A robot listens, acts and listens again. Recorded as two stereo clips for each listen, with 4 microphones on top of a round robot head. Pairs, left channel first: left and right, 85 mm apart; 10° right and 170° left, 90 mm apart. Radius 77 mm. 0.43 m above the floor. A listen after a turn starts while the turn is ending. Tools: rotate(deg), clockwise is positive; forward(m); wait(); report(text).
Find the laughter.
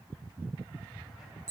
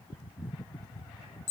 wait()
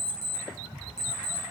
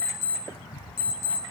wait()
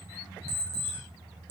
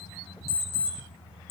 report("I can't make out laughter, only an alarm clock.")